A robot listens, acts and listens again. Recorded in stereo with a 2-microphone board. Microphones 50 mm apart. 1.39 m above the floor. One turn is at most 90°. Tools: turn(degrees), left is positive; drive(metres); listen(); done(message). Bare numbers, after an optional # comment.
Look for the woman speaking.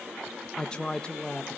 # The woman speaking: about 15° left or 165° left.
turn(15)
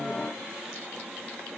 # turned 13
listen()
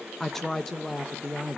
done("Found it: a woman speaking, straight ahead.")